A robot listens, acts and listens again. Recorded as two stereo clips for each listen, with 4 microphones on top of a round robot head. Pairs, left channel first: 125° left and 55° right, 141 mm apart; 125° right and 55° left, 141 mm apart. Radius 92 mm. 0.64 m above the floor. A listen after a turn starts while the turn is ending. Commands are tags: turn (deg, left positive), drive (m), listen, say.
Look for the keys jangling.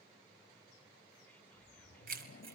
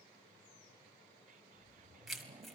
<turn deg="-40"/>
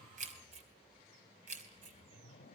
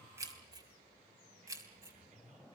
<turn deg="-15"/>
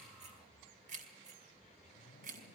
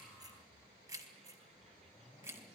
<turn deg="-20"/>
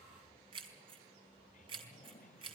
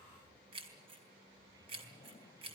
<say>Facing the keys jangling.</say>